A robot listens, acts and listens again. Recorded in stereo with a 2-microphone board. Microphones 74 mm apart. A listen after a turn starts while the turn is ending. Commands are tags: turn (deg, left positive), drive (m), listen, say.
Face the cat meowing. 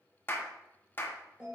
<listen/>
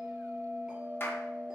<listen/>
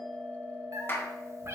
<turn deg="-40"/>
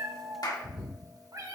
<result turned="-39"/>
<turn deg="-125"/>
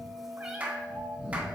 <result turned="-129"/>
<turn deg="-10"/>
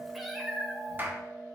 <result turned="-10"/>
<say>Facing the cat meowing.</say>